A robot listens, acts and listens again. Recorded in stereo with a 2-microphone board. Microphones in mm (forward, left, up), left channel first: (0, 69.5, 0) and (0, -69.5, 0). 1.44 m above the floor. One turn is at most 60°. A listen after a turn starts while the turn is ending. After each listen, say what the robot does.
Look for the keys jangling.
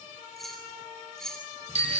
Turn 30° left.
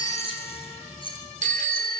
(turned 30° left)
Turn 60° left.
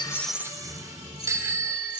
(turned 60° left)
Turn 60° left.
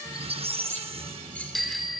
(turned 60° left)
Turn 20° left.
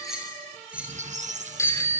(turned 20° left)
Turn 10° right.
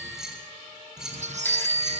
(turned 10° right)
Facing the keys jangling.